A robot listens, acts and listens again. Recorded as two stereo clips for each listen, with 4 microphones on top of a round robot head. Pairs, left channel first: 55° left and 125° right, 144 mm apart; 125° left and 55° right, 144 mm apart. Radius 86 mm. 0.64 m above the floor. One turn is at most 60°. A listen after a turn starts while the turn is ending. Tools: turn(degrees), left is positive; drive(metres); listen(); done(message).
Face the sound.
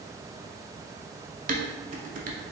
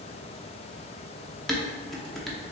turn(degrees=-60)
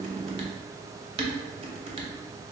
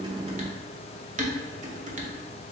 turn(degrees=-60)
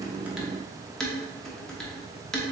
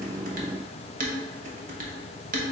turn(degrees=-35)
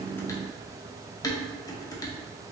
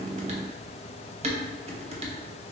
turn(degrees=-10)
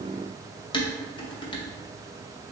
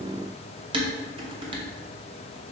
done("Found it: dishes clattering, straight ahead, under 1 m away.")